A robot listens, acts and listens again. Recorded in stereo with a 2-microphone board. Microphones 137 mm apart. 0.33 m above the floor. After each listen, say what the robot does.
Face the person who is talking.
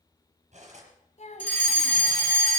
Turn 60° left.
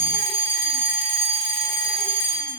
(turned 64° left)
Keep listening.
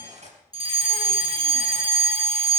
Keep listening.
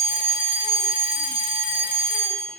I heard a child speaking, but can't make it out now. It was about 5° right or 55° left.